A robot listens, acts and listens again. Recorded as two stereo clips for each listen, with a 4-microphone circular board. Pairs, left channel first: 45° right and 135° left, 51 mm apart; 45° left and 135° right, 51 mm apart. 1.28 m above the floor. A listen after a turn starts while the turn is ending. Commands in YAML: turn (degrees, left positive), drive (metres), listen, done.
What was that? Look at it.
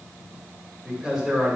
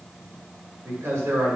turn: -130
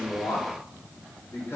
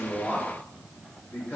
done: "Facing the man speaking, 2 to 4 m away."